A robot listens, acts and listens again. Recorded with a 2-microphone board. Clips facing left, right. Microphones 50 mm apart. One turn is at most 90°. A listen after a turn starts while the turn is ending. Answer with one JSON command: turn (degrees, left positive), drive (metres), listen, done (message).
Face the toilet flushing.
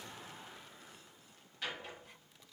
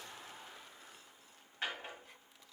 {"listen": true}
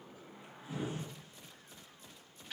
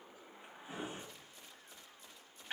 {"listen": true}
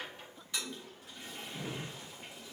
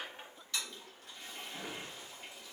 {"turn": 20}
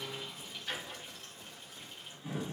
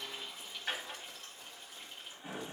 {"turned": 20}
{"done": "Facing the toilet flushing."}